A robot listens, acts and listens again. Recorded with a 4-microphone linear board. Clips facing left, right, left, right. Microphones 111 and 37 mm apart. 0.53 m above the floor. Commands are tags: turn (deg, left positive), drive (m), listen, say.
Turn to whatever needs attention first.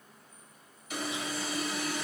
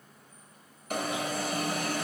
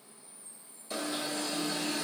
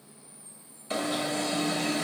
<turn deg="-55"/>
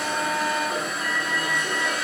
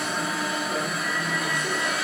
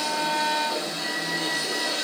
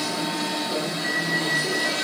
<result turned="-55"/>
<say>Found it: an alarm, straight ahead.</say>